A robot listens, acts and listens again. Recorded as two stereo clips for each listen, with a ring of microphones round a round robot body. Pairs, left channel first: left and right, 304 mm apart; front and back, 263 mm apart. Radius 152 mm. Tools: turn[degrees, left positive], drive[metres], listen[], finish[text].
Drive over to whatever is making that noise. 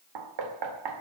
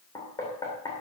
Thought: The knocking: 80° right.
Action: turn[-80]
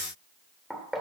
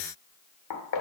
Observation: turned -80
Action: drive[1.0]
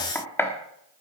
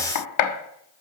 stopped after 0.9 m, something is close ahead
Action: finish[Arrived at the knocking, straight ahead.]